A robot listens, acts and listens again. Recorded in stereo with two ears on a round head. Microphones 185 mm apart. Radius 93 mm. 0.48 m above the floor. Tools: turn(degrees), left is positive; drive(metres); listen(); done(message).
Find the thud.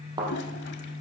turn(degrees=-20)
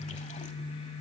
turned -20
listen()
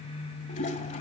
done("I heard a thud, but can't make it out now. It was about straight ahead or 140° right.")